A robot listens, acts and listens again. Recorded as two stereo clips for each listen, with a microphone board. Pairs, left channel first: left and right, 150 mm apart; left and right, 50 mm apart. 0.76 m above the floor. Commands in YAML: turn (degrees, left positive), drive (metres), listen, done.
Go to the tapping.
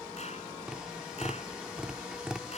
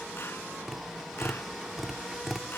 turn: -30
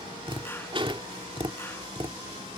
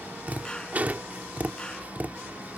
turn: -140
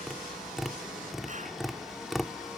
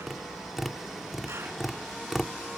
drive: 1.0
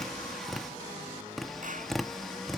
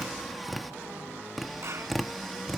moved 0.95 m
drive: 1.0
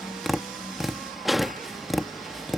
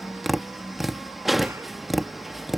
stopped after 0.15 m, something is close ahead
done: "Arrived at the tapping, straight ahead."